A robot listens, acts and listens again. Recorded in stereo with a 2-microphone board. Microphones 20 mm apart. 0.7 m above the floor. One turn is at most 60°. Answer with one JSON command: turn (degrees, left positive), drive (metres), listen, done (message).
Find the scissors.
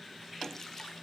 {"listen": true}
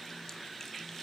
{"listen": true}
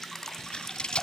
{"turn": 60}
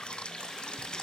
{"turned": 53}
{"turn": 35}
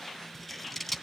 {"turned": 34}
{"done": "Found it: scissors, straight ahead."}